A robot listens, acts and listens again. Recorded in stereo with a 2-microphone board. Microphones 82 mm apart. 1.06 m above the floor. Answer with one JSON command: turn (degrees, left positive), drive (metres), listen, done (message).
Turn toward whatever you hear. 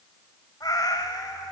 {"turn": 55}
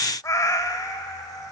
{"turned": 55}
{"turn": 60}
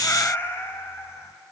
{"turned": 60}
{"turn": 35}
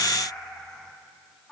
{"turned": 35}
{"turn": 10}
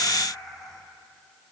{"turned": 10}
{"done": "Found it: a cat meowing, straight ahead, 2 to 4 m away."}